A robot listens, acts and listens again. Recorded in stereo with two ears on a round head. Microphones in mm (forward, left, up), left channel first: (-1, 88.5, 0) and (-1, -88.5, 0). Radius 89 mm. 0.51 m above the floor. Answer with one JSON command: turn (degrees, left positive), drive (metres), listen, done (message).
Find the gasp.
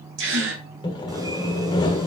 {"turn": -65}
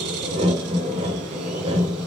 {"listen": true}
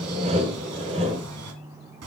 {"done": "I heard a gasp, but can't make it out now. It was about straight ahead or 50° right."}